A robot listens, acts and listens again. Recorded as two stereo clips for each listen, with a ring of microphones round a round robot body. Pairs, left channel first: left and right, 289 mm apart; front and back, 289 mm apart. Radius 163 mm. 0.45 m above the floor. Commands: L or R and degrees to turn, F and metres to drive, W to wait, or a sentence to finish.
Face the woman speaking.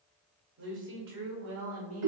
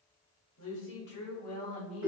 R65
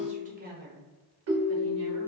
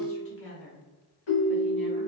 R45
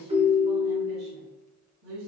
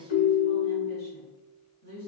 R65
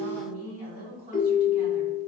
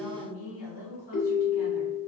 R25
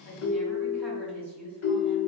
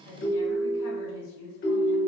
Found it: a woman speaking, straight ahead.